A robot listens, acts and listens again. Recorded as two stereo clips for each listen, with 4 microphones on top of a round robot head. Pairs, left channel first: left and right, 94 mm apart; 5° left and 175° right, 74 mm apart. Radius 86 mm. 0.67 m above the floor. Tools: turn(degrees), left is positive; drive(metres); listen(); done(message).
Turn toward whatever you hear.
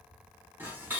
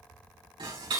turn(degrees=-160)
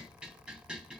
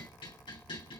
turn(degrees=-10)
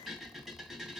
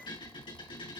done("Found it: dishes clattering, straight ahead, 2 to 4 m away.")